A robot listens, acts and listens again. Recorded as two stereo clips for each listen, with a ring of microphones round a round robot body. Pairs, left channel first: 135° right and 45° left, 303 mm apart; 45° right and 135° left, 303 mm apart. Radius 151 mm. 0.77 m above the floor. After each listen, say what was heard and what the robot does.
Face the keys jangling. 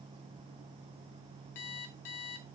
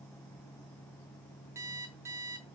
Keep listening.
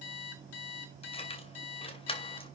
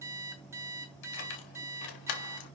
The keys jangling: 60° right. Turn 60° right.
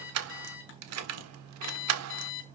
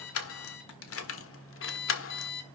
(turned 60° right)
Found it: keys jangling, straight ahead.